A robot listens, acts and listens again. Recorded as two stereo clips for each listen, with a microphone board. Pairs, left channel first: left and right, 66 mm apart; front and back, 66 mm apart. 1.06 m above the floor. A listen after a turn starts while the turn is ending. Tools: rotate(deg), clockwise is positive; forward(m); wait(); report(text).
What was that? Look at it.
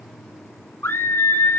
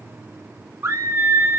rotate(-140)
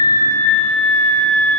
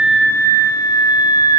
rotate(-15)
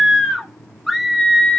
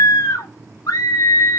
report("Facing the scream.")